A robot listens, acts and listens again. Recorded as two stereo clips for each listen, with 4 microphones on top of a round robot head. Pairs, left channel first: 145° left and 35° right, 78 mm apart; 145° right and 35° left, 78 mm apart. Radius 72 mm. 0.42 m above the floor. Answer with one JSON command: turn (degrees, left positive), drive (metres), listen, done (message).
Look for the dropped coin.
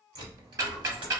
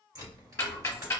{"turn": -10}
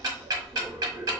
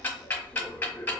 {"done": "Facing where the dropped coin came from. I can't hear it now."}